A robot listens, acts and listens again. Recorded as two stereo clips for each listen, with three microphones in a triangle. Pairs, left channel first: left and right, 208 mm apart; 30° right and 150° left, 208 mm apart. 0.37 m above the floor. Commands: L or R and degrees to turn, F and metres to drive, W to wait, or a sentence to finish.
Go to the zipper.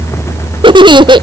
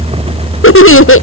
W
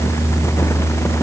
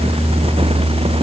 W
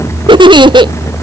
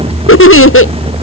I can't make out a zipper, only a giggle.